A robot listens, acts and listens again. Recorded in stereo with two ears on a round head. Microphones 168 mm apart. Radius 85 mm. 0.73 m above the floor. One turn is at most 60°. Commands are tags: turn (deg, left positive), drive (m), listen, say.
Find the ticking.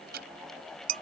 <turn deg="-60"/>
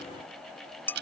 <turn deg="-60"/>
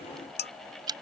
<turn deg="-20"/>
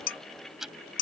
<say>Facing the ticking.</say>